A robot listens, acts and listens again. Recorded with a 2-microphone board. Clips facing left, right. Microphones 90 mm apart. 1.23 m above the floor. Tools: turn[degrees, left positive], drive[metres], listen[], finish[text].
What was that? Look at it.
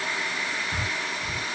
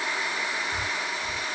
Thought: The breathing: about 60° left or 120° left.
Action: turn[60]
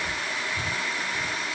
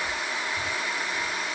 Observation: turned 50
Action: listen[]
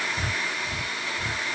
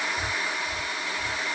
Thought: So it is at 20° left.
Action: turn[20]
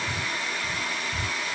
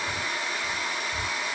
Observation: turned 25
Action: finish[Facing the breathing.]